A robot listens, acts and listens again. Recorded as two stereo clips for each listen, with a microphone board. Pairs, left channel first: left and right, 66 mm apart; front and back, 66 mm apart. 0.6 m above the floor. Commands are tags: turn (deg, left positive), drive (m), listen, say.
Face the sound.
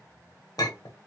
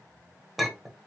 <turn deg="90"/>
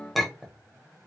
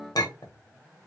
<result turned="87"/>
<say>Facing the clink.</say>